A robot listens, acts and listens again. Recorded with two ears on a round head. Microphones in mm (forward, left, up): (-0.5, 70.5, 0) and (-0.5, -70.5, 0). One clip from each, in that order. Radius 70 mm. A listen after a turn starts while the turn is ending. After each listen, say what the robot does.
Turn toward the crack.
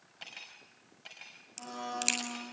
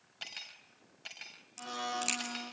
Turn 15° left.
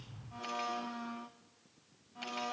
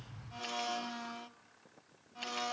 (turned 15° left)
Keep listening.
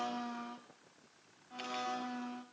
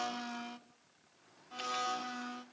I heard a crack, but can't make it out now. It was about straight ahead or 150° left.